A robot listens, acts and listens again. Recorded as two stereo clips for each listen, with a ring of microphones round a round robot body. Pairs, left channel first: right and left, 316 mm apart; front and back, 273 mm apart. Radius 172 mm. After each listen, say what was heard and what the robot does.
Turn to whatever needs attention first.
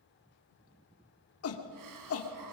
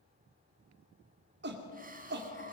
The shout: 130° right. Turn 130° right.
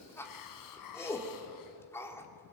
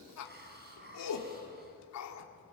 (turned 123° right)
The shout is now 10° right. Turn 10° right.
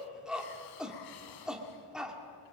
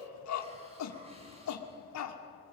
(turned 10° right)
Facing the shout, 2 to 4 m away.